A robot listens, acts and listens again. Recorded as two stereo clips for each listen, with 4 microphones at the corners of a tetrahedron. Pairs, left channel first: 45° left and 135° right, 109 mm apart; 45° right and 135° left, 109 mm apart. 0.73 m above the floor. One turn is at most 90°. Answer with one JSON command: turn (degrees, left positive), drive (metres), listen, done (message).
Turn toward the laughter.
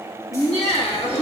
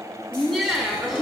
{"turn": 45}
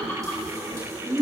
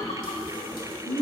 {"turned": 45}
{"turn": -25}
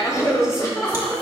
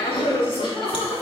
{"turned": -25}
{"turn": -10}
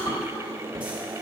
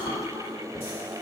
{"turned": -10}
{"listen": true}
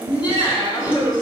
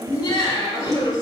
{"done": "Found it: laughter, straight ahead."}